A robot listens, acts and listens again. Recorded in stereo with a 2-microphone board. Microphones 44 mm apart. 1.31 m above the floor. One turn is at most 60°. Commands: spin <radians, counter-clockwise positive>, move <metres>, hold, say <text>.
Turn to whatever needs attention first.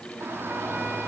spin -1.05
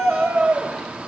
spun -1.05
spin -0.52
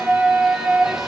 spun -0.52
say Facing the shout, 2 to 4 m away.